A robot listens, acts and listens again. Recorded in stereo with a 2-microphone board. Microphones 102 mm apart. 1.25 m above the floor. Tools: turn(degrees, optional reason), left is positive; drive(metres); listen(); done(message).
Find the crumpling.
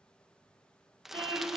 turn(degrees=-30)
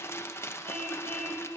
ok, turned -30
turn(degrees=25, reason="So it is at 25° left.")
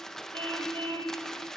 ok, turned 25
done("Found it: crumpling, straight ahead, under 1 m away.")